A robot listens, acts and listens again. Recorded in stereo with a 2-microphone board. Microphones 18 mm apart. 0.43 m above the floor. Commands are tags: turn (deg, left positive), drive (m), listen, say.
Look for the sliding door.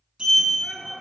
<turn deg="-60"/>
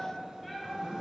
<turn deg="-60"/>
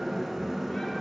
<turn deg="-10"/>
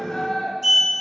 <say>Facing the sliding door, under 1 m away.</say>